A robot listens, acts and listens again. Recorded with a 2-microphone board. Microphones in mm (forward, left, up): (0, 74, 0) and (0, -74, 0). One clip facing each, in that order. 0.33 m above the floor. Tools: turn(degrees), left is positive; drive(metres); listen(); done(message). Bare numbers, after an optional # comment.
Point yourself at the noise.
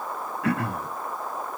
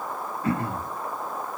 turn(90)
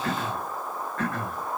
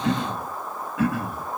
# So it is at 10° right.
turn(-10)
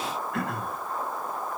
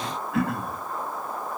done("Facing the throat clearing, 1 to 2 m away.")